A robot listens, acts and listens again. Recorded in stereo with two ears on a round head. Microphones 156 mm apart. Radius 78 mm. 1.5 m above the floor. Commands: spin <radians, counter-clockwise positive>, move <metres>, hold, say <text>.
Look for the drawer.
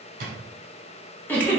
spin -0.96
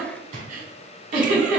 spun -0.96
spin -0.87
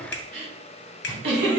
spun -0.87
hold
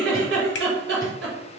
hold
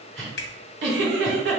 say I heard a drawer from this way, but can't make it out now.